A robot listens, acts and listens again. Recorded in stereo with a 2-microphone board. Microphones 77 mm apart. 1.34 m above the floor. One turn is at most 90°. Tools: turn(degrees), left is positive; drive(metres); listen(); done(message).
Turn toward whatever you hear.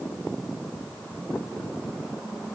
listen()
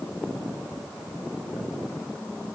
listen()
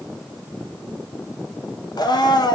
turn(degrees=65)
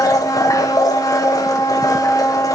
turn(degrees=50)
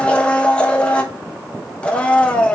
turn(degrees=15)
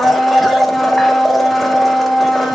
done("Found it: a blender, straight ahead, 1 to 2 m away.")